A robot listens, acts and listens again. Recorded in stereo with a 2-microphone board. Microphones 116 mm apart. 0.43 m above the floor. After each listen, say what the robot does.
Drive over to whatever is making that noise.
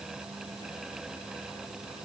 Keep listening.
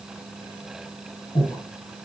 Turn 50° left.
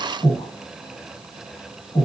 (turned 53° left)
Turn 70° left.
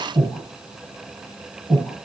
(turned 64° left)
Turn 10° left.
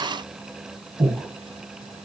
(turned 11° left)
Drive 1.0 m forward.
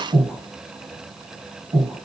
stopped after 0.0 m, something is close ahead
Something is in my way. I am facing the breathing but have not reached it.